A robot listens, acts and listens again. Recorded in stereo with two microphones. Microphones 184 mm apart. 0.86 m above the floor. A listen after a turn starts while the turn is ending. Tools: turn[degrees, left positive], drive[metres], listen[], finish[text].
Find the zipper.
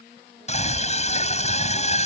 Action: listen[]
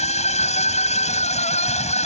Action: listen[]
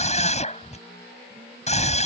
Action: finish[I can't make out a zipper to turn to.]